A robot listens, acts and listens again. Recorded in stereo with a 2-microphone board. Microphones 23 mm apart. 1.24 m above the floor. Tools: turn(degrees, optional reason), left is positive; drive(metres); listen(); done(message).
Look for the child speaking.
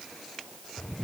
listen()
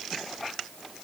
listen()
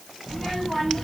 turn(degrees=25, reason="The child speaking: about 25° left or 155° left.")
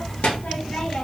turn(degrees=105, reason="So it is at 105° left.")
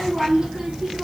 turn(degrees=-40, reason="The child speaking is now 40° right.")
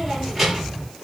done("Facing the child speaking.")